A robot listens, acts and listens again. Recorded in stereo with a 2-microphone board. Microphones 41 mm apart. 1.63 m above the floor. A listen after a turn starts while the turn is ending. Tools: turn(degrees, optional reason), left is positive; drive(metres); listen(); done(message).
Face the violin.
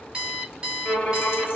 turn(degrees=25, reason="The violin: about 25° left or 155° left.")
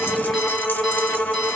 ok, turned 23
turn(degrees=135, reason="So it is at 135° left.")
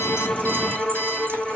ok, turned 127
done("Facing the violin, 1 to 2 m away.")